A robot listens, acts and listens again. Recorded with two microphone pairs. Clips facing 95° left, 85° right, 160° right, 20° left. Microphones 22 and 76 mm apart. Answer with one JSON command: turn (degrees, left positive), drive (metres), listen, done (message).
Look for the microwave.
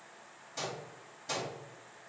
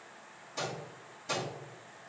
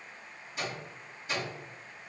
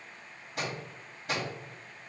{"turn": 10}
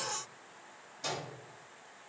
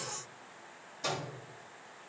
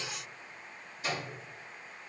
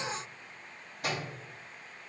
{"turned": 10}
{"done": "Facing the microwave."}